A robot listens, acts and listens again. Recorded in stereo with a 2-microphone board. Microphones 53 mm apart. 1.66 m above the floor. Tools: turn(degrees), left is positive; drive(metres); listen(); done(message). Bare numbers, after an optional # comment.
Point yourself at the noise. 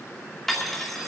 turn(30)
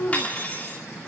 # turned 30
# So it is at 145° left.
turn(145)
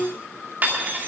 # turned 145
# The cutlery clinking is now 40° right.
turn(-40)
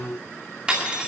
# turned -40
# The cutlery clinking is now 20° right.
turn(-20)
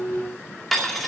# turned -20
done("Found it: cutlery clinking, straight ahead.")